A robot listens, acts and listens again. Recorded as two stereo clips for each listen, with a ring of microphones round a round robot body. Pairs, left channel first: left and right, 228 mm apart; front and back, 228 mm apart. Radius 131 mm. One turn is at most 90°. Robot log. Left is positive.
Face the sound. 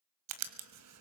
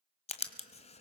note: The writing: 65° right.
cmd yaw -65
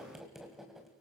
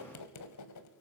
end: Facing the writing, 1 to 2 m away.